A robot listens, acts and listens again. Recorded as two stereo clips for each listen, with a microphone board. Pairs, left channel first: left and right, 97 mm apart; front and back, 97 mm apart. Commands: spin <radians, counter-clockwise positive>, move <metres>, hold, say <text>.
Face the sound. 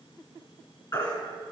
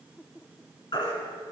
spin 0.70
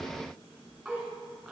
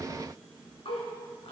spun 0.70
hold
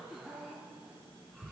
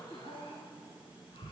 hold
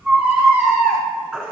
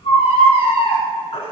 say Found it: a baby crying, straight ahead, 2 to 4 m away.